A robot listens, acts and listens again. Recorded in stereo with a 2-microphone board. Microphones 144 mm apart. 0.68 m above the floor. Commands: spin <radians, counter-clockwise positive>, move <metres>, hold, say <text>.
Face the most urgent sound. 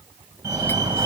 spin -0.35
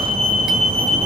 spin -2.53
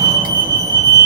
spin -0.61
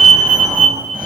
spin -0.17
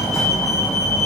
say Facing the fire alarm, over 4 m away.